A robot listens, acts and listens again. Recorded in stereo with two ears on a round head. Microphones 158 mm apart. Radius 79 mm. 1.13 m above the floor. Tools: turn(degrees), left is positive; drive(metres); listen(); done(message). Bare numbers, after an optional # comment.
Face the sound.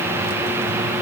listen()
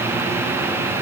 listen()
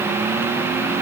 done("I can't make out anything to turn to.")